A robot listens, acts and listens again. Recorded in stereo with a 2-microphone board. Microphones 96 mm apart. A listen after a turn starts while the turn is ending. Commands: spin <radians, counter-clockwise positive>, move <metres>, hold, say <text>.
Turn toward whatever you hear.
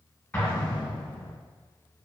spin 0.26
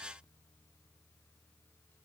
hold
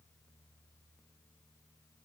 say I heard an explosion, but can't make it out now. It was about straight ahead or 150° left.